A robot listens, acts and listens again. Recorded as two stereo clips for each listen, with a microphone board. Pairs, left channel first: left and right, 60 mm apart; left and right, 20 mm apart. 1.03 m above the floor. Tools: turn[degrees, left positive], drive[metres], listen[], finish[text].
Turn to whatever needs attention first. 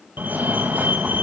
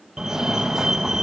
Thought: The fire alarm: about 30° right or 150° right.
Action: turn[-30]
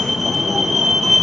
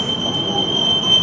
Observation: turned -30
Action: finish[Found it: a fire alarm, straight ahead, 1 to 2 m away.]